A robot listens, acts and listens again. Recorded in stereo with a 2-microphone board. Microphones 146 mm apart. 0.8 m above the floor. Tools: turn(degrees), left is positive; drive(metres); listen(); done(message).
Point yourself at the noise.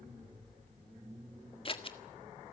turn(degrees=40)
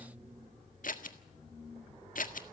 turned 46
turn(degrees=95)
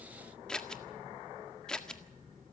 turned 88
done("Facing the scissors.")